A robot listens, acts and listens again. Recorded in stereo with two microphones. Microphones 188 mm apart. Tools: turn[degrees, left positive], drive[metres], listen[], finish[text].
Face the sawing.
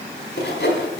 Thought: The sawing: about 70° left or 110° left.
Action: turn[70]
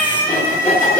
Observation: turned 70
Thought: So it is at 40° left.
Action: turn[40]
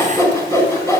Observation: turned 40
Thought: The sawing is now 15° left.
Action: turn[15]
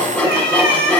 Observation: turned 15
Action: finish[Facing the sawing, 1 to 2 m away.]